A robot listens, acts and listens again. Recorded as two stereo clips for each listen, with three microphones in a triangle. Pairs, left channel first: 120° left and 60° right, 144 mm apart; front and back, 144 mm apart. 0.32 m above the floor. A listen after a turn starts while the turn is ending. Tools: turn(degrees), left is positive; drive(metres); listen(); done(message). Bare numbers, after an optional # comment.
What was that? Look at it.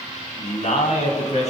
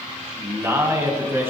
# The man speaking: 110° left.
turn(110)
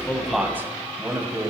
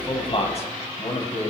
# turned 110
done("Facing the man speaking, 2 to 4 m away.")